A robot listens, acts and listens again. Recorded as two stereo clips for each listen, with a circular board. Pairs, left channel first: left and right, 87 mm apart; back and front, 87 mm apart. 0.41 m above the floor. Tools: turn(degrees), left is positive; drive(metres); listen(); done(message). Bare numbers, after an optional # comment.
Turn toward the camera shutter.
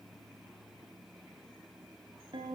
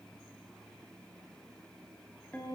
listen()
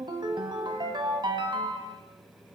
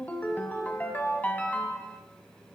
listen()
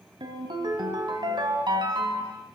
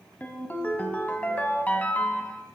done("I can't make out a camera shutter, only a ringtone.")